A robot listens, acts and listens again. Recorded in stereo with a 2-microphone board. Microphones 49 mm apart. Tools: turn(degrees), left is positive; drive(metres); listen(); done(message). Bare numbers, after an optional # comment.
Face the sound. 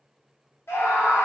# The scream: about 65° left or 115° left.
turn(65)
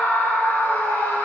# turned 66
# So it is at 40° left.
turn(40)
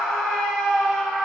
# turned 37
done("Found it: a scream, straight ahead, 2 to 4 m away.")